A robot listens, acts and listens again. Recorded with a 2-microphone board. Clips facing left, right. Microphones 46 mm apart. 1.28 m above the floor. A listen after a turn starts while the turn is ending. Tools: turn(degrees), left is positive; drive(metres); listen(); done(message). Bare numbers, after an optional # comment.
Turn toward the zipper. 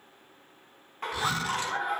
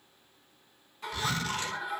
# The zipper: about 15° left or 165° left.
turn(15)
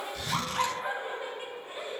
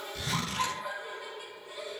done("Found it: a zipper, straight ahead.")